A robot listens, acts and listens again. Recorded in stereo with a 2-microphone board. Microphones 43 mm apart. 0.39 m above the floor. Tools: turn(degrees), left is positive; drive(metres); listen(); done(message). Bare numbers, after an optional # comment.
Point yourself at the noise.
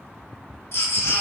# The baby crying: about 70° left or 110° left.
turn(70)
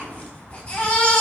# So it is at 30° left.
turn(30)
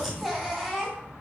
done("Found it: a baby crying, straight ahead, 1 to 2 m away.")